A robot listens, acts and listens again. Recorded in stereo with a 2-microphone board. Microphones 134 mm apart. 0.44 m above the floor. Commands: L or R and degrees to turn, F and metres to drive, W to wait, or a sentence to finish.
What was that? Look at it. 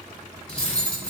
L50
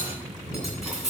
Facing the cutlery clinking.